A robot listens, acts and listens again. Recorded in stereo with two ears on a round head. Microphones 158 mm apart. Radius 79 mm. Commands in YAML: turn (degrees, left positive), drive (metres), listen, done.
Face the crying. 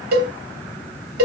listen: true
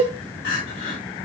turn: 60
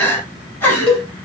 turn: 10
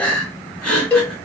done: "Facing the crying."